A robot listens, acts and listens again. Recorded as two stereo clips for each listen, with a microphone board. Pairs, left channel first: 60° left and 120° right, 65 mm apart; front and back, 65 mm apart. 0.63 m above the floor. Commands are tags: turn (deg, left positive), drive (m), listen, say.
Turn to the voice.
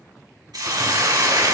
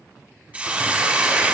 <listen/>
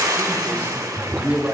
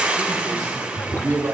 <turn deg="180"/>
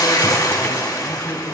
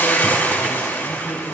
<listen/>
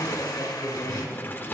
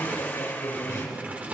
<turn deg="-10"/>
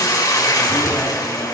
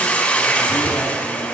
<listen/>
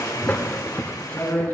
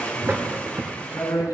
<say>Facing the man speaking, over 4 m away.</say>